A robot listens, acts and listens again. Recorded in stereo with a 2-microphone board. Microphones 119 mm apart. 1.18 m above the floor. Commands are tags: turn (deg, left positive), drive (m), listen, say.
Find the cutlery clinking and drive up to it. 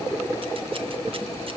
<listen/>
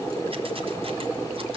<listen/>
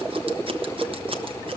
<say>I can't make out cutlery clinking.</say>